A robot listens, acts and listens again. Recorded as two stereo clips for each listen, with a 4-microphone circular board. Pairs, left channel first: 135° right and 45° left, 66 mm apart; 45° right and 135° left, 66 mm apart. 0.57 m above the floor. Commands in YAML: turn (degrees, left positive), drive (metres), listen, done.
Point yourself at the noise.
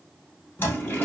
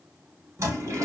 turn: 170
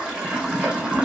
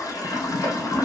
turn: -30
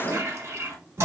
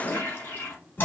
turn: 10
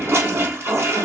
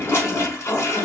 done: "Found it: a toilet flushing, straight ahead."